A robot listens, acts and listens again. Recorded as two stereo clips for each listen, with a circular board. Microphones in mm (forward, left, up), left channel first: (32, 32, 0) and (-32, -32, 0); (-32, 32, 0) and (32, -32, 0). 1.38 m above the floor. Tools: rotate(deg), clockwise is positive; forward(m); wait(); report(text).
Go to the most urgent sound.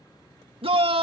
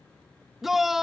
rotate(130)
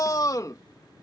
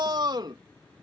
forward(1.0)
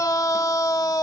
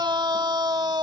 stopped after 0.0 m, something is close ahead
report("Blocked. The shout is further on, straight ahead.")